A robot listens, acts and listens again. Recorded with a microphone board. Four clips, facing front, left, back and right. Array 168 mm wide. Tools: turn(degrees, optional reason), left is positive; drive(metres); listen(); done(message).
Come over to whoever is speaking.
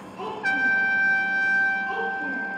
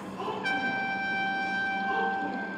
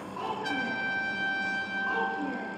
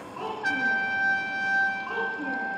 turn(degrees=-125, reason="The child speaking: 125° right.")
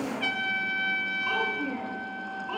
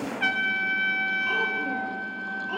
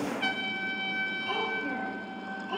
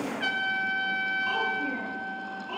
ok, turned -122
listen()
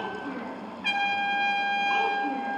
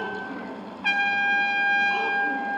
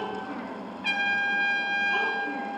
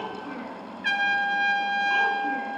listen()
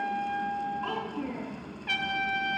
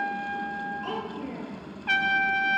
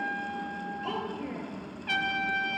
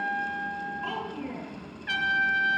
drive(metres=1.0)
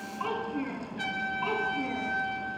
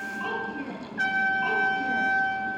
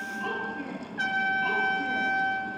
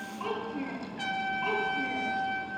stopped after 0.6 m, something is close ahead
done("Blocked. The child speaking is further on, straight ahead.")